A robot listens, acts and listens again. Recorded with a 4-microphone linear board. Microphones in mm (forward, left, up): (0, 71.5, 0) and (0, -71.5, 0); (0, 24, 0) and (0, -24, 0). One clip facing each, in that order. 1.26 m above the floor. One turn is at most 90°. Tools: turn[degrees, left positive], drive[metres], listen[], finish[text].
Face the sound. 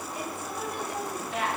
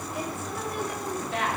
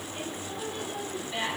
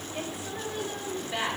Thought: The woman speaking: about 70° right or 110° right.
Action: turn[-70]
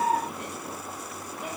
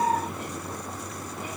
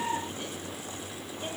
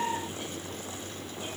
Action: listen[]
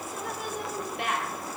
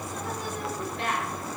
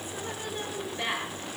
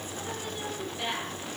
Thought: So it is at 15° left.
Action: turn[15]
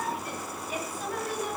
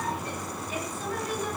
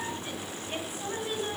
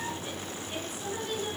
Thought: The woman speaking is now 15° left.
Action: turn[15]
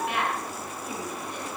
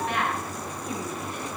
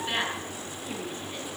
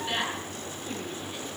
Action: finish[Facing the woman speaking, over 4 m away.]